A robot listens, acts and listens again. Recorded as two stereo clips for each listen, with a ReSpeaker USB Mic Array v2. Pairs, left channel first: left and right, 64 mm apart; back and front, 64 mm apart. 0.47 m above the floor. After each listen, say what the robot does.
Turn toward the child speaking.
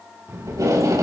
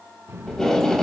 Turn 50° right.
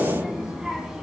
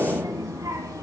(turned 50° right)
Turn 10° right.
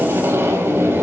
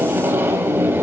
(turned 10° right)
Keep listening.
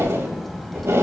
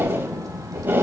Found it: a child speaking, straight ahead, 2 to 4 m away.